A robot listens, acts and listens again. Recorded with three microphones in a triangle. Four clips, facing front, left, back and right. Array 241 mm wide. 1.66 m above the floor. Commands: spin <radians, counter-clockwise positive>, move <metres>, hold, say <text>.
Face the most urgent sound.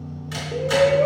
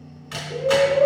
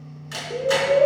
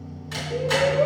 spin 2.97
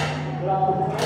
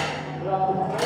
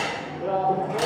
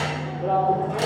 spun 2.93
say Facing the shout, 2 to 4 m away.